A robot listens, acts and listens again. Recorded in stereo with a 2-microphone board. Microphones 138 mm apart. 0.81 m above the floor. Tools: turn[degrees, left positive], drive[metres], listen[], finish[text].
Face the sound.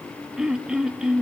Action: turn[-30]
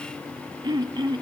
Thought: So it is at 145° right.
Action: turn[-145]
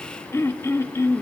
Thought: The throat clearing is now 20° left.
Action: turn[20]
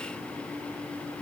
Action: listen[]
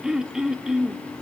Action: finish[Found it: throat clearing, straight ahead.]